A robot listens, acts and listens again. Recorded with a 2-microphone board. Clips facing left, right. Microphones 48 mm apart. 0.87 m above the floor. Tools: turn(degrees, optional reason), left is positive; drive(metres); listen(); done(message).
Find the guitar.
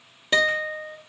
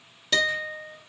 turn(degrees=25, reason="The guitar: about 25° left or 155° left.")
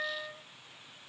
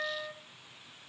done("Facing the guitar, 1 to 2 m away.")